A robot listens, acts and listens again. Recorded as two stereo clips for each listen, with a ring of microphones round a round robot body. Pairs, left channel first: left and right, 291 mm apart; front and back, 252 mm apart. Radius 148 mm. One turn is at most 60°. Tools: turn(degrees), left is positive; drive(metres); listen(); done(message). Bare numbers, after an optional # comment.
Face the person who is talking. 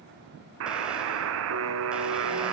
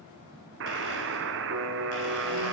listen()
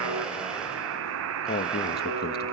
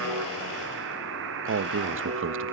# The man speaking: 145° left.
turn(60)
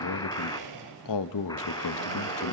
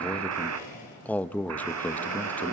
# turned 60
# The man speaking is now 85° left.
turn(60)
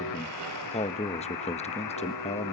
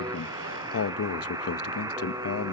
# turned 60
# The man speaking is now 20° left.
turn(20)
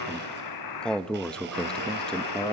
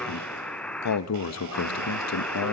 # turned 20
done("Facing the man speaking, 1 to 2 m away.")